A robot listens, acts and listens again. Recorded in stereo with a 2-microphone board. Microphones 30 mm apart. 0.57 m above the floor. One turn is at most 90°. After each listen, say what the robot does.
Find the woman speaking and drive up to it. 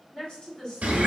Turn 35° left.
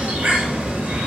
Keep listening.
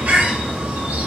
Keep listening.
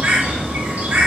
I heard a woman speaking, but can't make it out now. It was about straight ahead or 110° left. I did not reach it.